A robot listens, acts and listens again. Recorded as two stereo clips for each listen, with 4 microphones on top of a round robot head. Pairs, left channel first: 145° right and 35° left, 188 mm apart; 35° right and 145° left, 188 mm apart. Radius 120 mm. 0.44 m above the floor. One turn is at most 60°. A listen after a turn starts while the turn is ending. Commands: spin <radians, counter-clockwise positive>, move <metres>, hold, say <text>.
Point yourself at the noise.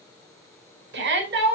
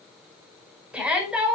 spin 1.05
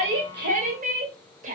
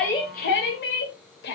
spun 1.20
spin -0.17
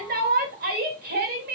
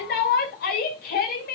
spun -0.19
say Facing the shout.